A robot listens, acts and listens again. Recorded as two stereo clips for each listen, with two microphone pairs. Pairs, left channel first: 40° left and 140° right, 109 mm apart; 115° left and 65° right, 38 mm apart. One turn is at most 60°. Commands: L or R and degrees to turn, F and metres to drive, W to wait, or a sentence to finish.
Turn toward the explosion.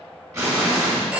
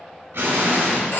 R60
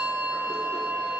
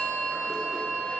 R15
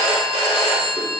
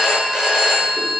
I heard an explosion from this way, but can't make it out now.